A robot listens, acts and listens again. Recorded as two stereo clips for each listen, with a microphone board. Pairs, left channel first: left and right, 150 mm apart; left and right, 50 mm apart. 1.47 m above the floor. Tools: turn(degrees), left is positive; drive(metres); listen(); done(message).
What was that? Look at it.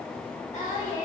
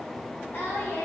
turn(degrees=45)
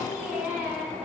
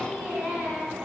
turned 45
turn(degrees=-10)
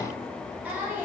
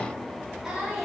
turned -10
turn(degrees=-15)
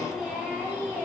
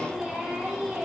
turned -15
turn(degrees=-15)
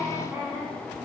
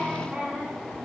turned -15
turn(degrees=-20)
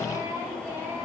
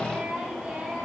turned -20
turn(degrees=-15)
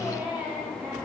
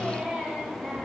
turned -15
turn(degrees=-10)
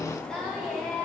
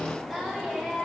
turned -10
done("Found it: singing, straight ahead.")